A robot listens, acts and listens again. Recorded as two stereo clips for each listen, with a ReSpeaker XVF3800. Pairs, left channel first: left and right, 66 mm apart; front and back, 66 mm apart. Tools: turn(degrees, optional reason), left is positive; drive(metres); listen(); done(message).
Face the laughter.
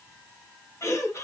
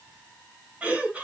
turn(degrees=115, reason="The laughter: 115° left.")
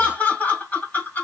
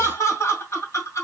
turn(degrees=30, reason="The laughter is now 30° left.")
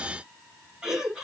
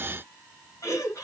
turn(degrees=-10, reason="The laughter is now 10° right.")
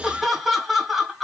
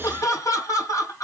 done("Facing the laughter.")